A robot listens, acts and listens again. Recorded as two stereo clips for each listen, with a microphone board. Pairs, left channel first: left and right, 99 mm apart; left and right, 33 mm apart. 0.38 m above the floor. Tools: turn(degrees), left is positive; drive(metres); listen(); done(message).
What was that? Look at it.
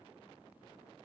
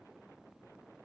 listen()
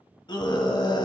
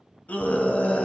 turn(degrees=45)
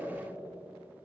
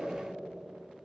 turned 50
listen()
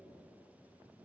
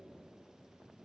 listen()
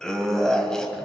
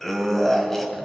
done("Found it: a scream, straight ahead, 1 to 2 m away.")